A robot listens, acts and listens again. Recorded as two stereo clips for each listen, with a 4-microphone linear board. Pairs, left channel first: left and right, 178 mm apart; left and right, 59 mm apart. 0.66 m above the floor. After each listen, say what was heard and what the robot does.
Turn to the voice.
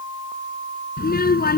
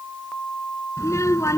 The child speaking: about 55° left or 125° left. Turn 55° left.
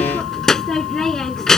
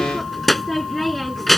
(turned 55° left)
Facing the child speaking.